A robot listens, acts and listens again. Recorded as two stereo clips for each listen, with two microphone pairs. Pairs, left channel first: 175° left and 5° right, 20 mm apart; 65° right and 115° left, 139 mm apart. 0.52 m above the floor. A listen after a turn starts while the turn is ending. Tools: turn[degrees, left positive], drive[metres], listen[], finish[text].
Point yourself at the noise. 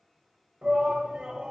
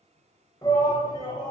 Thought: The shout: 10° right.
Action: turn[-10]
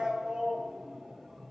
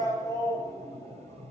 Action: finish[Found it: a shout, straight ahead, 2 to 4 m away.]